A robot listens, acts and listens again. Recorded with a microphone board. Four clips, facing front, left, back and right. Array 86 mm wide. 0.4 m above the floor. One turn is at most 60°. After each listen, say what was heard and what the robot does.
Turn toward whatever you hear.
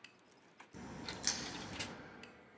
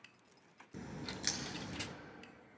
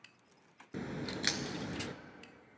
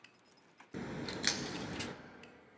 The crack: 145° right. Turn 60° right.
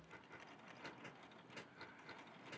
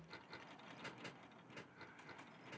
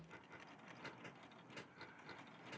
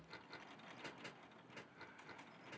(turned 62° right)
Nothing new. It was at 85° right. Turn 60° right.
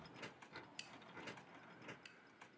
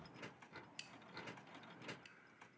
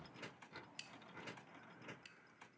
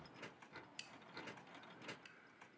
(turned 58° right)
Nothing new. It was at 25° right. Turn 25° right.
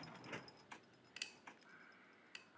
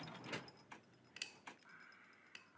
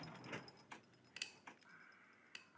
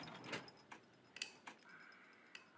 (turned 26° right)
Facing where the crack came from. I can't hear it now.